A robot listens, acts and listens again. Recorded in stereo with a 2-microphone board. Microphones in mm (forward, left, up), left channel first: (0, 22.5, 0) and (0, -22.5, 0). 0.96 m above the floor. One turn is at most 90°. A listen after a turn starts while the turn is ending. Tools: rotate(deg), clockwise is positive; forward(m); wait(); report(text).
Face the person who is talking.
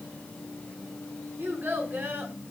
rotate(45)
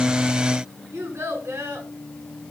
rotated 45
rotate(85)
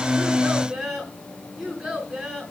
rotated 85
rotate(15)
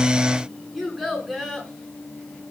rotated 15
report("Facing the child speaking.")